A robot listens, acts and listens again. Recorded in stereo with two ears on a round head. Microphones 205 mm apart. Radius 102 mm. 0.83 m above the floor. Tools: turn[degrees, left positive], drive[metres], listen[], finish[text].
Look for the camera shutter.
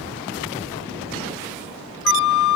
Action: listen[]
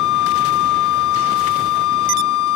Action: listen[]
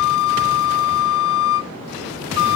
Action: finish[I can't make out a camera shutter to turn to.]